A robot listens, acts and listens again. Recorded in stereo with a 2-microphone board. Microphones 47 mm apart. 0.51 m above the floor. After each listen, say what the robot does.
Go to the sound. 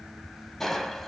Turn 30° left.
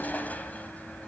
Turn 145° left.
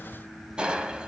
Turn 20° right.
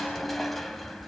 Drive 1.0 m forward.
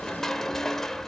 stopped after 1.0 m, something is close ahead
Turn 10° left.
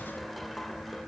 Keep listening.
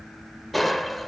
Arrived at the crushing, straight ahead.